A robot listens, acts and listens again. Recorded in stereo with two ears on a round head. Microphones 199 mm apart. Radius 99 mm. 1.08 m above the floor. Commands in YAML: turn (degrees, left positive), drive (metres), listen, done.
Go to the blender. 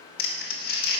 listen: true
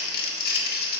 listen: true
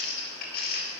done: "I can't make out a blender to turn to."